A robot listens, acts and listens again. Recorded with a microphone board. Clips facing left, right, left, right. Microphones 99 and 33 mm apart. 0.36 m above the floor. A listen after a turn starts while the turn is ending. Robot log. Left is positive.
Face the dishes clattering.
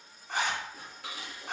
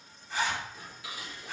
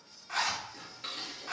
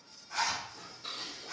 note: The dishes clattering: about 60° left or 120° left.
cmd yaw +60
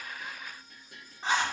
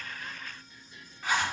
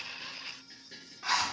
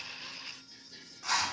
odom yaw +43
note: So it is at 80° left.
cmd yaw +80
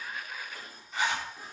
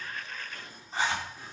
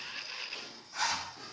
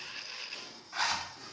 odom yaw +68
note: The dishes clattering is now 10° left.
cmd yaw +10
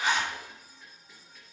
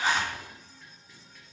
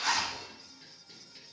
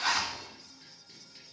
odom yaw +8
end: Found it: dishes clattering, straight ahead, over 4 m away.